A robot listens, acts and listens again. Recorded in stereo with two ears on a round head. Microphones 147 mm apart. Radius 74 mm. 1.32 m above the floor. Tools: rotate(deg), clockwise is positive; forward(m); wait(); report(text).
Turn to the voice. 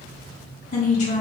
rotate(-45)
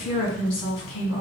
rotate(-90)
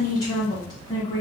rotate(-25)
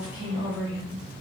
rotate(10)
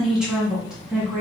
report("Found it: a woman speaking, straight ahead.")